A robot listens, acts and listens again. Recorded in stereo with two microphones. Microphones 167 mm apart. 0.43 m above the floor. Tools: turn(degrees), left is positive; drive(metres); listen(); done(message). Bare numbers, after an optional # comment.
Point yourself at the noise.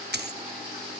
turn(-90)
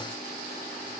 done("Facing where the dropped coin came from. I can't hear it now.")